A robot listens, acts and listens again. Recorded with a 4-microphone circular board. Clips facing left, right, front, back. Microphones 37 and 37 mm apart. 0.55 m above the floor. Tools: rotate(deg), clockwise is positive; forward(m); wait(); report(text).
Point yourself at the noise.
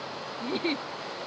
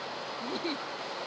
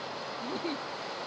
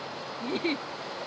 rotate(-140)
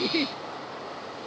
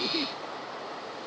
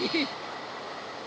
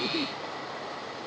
rotate(-40)
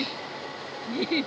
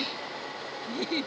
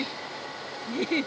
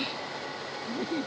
rotate(-20)
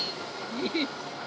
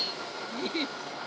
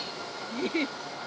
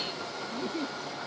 rotate(-10)
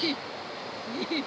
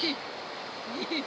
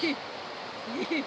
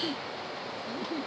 report("Found it: a giggle, straight ahead.")